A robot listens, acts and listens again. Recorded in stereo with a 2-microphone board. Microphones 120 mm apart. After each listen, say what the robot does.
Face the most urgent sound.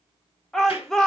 Turn 30° left.
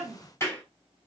Keep listening.
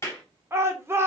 Turn 25° right.
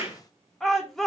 Facing the shout.